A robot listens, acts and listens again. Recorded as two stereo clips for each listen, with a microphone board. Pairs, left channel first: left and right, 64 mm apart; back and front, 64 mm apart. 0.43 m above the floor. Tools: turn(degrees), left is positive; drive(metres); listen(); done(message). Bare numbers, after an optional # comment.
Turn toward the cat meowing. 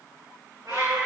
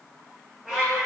# The cat meowing: 85° right.
turn(-85)
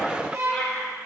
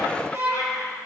# The cat meowing is now 10° left.
turn(10)
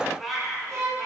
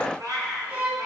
done("Facing the cat meowing, over 4 m away.")